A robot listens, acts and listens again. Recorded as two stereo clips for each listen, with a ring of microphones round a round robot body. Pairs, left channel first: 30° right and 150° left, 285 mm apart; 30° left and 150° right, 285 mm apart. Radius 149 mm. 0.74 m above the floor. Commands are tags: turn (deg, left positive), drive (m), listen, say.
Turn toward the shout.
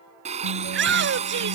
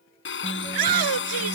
<turn deg="-160"/>
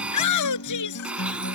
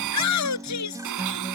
<say>Found it: a shout, straight ahead.</say>